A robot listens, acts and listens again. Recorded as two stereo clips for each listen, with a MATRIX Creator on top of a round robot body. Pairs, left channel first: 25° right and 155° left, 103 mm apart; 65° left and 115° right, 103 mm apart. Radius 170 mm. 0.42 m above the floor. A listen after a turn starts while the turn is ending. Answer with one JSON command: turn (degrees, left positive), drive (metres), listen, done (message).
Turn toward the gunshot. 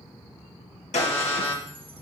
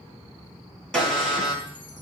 {"turn": -15}
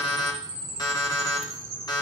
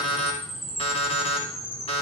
{"done": "I heard a gunshot from this way, but can't make it out now."}